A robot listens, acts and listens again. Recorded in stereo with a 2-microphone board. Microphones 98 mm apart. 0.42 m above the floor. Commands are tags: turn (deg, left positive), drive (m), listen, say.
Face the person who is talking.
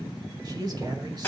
<turn deg="-40"/>
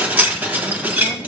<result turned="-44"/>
<listen/>
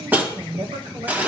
<turn deg="-85"/>
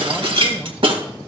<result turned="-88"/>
<listen/>
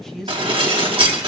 <say>Found it: a man speaking, straight ahead.</say>